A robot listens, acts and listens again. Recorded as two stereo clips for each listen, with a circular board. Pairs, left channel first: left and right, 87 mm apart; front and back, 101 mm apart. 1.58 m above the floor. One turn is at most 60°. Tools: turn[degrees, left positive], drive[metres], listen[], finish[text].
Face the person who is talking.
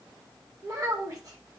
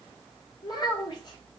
Thought: The child speaking: 40° right.
Action: turn[-40]
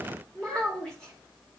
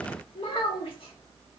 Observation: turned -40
Thought: The child speaking is now 10° left.
Action: turn[10]
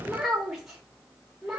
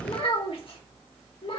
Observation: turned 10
Action: finish[Found it: a child speaking, straight ahead, 1 to 2 m away.]